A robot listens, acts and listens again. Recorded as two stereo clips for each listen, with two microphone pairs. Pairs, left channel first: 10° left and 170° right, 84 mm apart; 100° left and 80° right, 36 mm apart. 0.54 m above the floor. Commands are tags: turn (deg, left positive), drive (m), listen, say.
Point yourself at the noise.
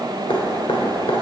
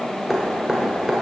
<say>Facing the dripping, 1 to 2 m away.</say>